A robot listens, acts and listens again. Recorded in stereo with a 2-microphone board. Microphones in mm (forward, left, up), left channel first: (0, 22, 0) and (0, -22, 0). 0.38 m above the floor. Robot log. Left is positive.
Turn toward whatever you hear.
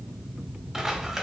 cmd yaw -30
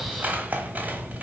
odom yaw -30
note: So it is at 140° right.
cmd yaw -140
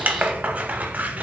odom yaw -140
note: The scissors is now 35° right.
cmd yaw -35
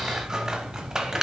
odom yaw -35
note: The scissors is now 15° right.
cmd yaw -15
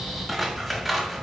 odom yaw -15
end: Found it: scissors, straight ahead, under 1 m away.